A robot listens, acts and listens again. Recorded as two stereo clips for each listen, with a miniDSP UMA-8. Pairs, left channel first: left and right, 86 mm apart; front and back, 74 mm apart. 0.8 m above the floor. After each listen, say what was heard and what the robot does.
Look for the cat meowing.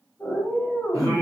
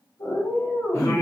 Found it: a cat meowing, straight ahead.